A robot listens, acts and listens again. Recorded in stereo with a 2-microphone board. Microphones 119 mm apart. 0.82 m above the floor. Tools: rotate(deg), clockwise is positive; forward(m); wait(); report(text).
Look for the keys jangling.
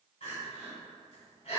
wait()
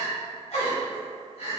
wait()
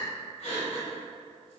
report("I can't make out keys jangling, only crying.")